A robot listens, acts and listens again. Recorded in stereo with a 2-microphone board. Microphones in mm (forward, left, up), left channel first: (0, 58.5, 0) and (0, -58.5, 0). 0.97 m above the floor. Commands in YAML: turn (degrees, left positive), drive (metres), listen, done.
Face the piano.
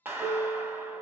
turn: -30
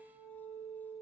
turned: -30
done: "Facing the piano."